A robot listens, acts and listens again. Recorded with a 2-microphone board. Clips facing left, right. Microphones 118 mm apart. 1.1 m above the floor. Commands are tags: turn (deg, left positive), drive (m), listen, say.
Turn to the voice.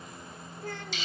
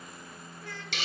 <turn deg="50"/>
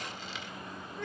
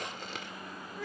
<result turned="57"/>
<say>Facing the child speaking.</say>